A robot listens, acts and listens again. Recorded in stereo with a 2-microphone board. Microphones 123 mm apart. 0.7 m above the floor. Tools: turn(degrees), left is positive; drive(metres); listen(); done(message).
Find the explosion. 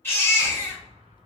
turn(degrees=-60)
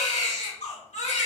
listen()
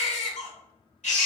done("I heard an explosion, but can't make it out now. It was about straight ahead or 60° right.")